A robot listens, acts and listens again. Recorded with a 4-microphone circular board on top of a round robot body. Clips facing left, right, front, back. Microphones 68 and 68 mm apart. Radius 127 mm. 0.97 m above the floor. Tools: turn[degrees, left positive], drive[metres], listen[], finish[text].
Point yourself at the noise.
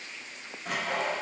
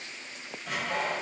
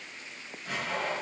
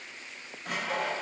Thought: The sawing: 130° left.
Action: turn[130]
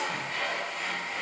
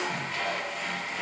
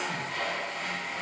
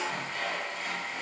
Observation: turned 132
Action: finish[Found it: sawing, straight ahead.]